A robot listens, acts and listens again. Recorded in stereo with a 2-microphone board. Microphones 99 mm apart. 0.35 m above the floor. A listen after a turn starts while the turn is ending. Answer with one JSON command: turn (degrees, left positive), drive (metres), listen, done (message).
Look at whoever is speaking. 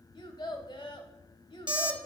{"turn": 55}
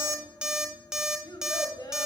{"turn": 55}
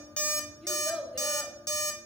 {"done": "Facing the child speaking."}